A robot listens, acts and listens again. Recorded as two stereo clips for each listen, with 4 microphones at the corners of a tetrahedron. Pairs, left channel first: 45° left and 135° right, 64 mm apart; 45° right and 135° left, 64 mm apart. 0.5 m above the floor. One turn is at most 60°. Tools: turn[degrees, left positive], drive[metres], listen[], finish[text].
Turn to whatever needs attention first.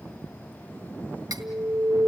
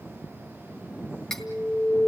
Thought: The alarm: 165° right.
Action: turn[-60]
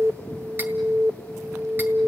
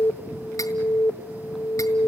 Thought: The alarm is now 115° right.
Action: turn[-60]
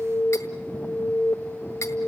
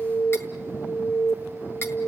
Thought: The alarm is now 35° right.
Action: turn[-35]
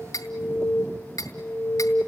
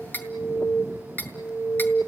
Thought: The alarm is now 25° right.
Action: turn[-25]
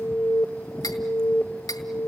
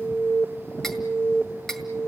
Action: finish[Facing the alarm.]